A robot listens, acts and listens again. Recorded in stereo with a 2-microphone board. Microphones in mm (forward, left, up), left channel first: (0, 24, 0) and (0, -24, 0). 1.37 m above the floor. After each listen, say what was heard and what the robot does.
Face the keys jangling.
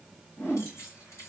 The keys jangling: about 75° left or 105° left. Turn 75° left.
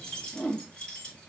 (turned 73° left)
So it is at 20° left. Turn 20° left.
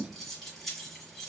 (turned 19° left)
Facing the keys jangling, 2 to 4 m away.